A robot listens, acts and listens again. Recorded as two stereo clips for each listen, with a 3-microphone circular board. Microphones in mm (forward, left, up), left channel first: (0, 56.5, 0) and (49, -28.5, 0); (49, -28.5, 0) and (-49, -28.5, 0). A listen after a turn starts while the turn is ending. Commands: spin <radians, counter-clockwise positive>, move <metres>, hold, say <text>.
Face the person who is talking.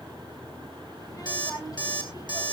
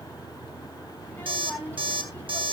spin 1.31
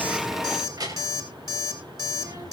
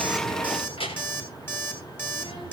spin -0.26
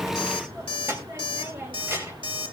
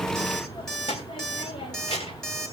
say Found it: a child speaking, straight ahead.